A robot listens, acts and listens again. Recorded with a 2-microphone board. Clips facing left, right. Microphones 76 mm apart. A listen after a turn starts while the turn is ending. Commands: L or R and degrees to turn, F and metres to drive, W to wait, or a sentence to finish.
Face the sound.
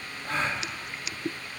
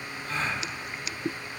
L70
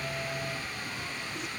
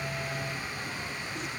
W
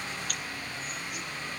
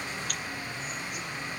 I heard a gasp, but can't make it out now. It was about straight ahead or 40° left.